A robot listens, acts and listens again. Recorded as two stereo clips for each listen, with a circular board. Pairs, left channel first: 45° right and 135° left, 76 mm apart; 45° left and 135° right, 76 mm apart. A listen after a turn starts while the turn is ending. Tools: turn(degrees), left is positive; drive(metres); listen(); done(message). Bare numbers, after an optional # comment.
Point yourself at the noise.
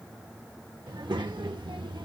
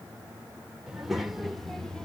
# The child speaking: 125° left.
turn(125)
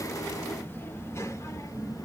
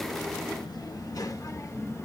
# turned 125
# The child speaking is now 10° right.
turn(-10)
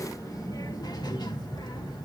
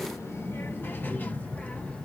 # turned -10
# The child speaking is now 30° right.
turn(-30)
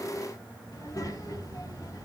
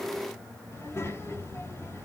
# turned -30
# The child speaking is now 10° right.
turn(-10)
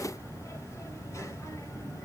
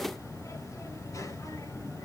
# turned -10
done("Found it: a child speaking, straight ahead.")